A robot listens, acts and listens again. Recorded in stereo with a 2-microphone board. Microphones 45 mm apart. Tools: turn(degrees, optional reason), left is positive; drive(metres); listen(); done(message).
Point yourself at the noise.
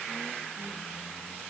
listen()
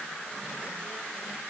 listen()
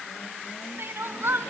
turn(degrees=-65, reason="The crying: about 65° right or 115° right.")
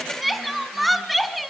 done("Found it: crying, straight ahead.")